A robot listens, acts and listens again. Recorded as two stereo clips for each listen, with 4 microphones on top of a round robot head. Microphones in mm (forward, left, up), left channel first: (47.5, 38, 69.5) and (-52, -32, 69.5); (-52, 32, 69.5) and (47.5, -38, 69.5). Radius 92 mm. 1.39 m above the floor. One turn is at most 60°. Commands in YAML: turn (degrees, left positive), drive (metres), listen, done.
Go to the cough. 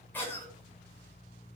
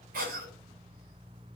turn: -40
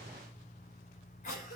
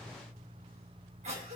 drive: 1.0
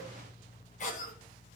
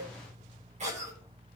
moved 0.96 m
drive: 1.0
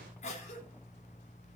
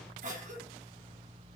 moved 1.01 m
drive: 1.0
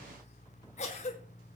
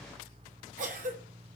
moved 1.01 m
drive: 1.0
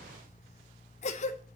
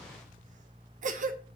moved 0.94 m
drive: 1.0
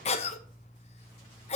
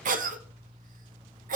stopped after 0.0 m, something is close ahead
turn: -10
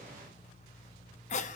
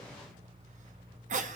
done: "Arrived at the cough, straight ahead."